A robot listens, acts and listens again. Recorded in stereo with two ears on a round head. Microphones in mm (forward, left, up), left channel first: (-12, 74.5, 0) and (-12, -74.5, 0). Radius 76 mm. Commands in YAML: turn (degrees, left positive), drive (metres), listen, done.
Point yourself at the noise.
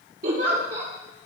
turn: -60
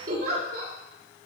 turn: -60
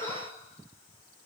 turn: 20
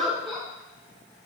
done: "Facing the giggle."